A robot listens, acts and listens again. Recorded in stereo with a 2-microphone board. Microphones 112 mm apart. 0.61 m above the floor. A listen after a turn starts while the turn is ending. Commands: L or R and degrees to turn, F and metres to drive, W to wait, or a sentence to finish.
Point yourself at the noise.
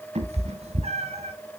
R70
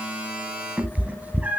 R15
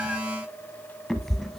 Facing the cat meowing, under 1 m away.